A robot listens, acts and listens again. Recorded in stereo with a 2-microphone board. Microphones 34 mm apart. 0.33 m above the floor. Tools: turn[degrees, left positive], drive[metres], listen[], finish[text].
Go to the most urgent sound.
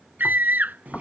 Thought: The scream: about 65° right or 115° right.
Action: turn[-65]
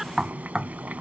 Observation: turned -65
Action: listen[]
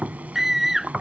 Action: drive[1.0]
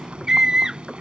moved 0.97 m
Thought: The scream is now 20° right.
Action: turn[-20]
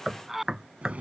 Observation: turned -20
Action: drive[1.0]
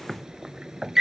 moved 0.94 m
Thought: The scream is now 10° right.
Action: turn[-10]
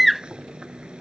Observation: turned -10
Action: drive[1.0]
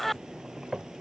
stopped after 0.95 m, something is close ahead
Thought: The scream is now 10° left.
Action: turn[10]
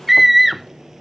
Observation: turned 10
Action: finish[I am next to the scream.]